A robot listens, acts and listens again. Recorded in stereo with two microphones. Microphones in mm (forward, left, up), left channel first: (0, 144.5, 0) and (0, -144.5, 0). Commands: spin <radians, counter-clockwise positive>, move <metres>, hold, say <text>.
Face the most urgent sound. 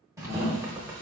spin -0.44
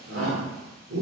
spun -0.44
spin -2.18
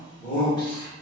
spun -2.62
spin 0.44
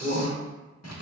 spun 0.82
spin -0.44
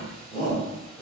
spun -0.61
spin 0.26
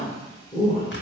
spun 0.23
say Facing the shout, 1 to 2 m away.